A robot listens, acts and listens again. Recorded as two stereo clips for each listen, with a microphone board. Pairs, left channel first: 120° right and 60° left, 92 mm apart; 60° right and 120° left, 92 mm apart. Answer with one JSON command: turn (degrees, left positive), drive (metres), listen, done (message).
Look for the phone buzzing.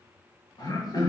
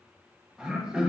{"listen": true}
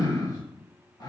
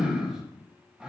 {"listen": true}
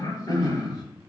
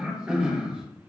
{"done": "I can't make out a phone buzzing, only throat clearing."}